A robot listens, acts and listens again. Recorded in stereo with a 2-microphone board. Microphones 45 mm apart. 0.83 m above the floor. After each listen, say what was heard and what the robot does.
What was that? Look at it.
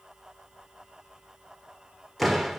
Turn 30° left.
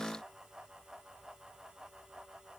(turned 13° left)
Keep listening.
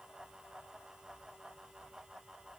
I heard a door slam, but can't make it out now. It was about 10° right or 165° left.